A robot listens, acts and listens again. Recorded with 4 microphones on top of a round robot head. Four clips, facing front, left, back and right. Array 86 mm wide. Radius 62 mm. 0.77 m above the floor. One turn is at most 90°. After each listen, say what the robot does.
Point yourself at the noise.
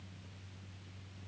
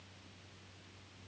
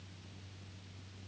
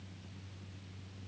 Keep listening.
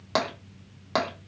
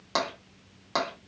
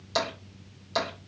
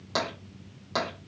Turn 15° left.
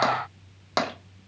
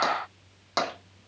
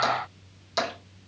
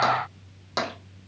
Facing the tapping, 1 to 2 m away.